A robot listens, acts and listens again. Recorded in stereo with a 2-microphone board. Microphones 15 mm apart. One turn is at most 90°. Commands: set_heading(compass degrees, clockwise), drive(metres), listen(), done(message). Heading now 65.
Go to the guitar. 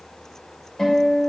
set_heading(30)
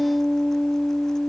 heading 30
set_heading(300)
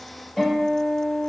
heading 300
drive(1.0)
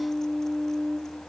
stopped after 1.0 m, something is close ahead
done("Arrived at the guitar, straight ahead.")